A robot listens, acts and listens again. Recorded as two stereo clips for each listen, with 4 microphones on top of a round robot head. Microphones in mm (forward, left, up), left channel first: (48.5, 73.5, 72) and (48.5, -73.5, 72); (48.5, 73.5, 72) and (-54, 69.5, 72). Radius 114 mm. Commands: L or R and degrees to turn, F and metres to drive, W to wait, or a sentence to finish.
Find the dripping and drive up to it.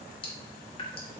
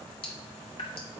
L35
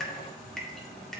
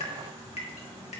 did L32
F1.0
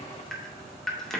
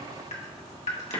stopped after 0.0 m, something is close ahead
Something is in my way. I am facing the dripping but have not reached it.